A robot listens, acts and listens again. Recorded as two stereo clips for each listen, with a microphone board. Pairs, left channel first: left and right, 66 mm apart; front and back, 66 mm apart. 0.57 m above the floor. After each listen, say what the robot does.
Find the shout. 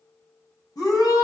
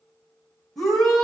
Turn 85° left.
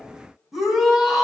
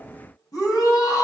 Found it: a shout, straight ahead.